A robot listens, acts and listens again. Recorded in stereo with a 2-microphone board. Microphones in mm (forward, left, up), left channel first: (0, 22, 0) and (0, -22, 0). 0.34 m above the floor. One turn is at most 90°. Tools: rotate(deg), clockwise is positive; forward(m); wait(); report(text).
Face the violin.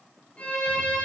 rotate(-30)
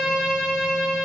report("Found it: a violin, straight ahead, 2 to 4 m away.")